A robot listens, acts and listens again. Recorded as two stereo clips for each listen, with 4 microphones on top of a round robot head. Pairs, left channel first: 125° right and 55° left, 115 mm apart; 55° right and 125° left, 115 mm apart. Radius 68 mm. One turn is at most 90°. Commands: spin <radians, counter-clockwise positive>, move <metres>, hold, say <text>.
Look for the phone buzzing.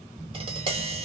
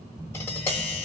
spin 1.57
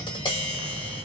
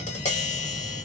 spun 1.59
spin 0.17
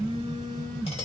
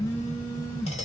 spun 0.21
say Found it: a phone buzzing, straight ahead, 2 to 4 m away.